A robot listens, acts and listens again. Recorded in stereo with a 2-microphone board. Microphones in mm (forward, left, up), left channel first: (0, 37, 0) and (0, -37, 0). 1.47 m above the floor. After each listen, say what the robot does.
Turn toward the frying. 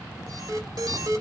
Keep listening.
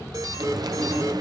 Turn 65° right.
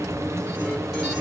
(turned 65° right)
Turn 45° right.
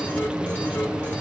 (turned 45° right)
Turn 15° right.
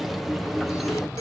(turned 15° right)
Facing the frying, under 1 m away.